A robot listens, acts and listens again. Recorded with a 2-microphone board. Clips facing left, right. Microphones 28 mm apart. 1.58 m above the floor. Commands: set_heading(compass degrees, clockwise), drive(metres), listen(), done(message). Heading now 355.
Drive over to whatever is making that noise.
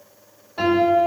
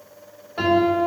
set_heading(25)
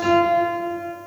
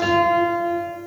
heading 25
set_heading(145)
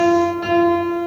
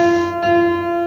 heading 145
drive(1.0)
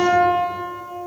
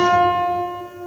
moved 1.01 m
set_heading(135)
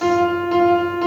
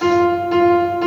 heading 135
drive(1.0)
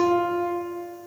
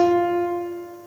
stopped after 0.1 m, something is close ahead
done("Arrived at the piano, straight ahead.")